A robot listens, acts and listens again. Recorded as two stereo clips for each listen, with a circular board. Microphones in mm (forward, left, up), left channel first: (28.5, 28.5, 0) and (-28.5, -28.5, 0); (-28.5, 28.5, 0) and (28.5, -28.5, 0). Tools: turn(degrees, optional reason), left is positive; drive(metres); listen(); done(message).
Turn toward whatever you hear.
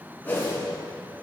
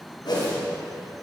turn(degrees=115, reason="The whoosh: 115° left.")
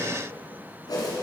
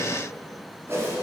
turn(degrees=15, reason="The whoosh is now 15° left.")
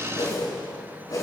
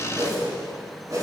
done("Facing the whoosh.")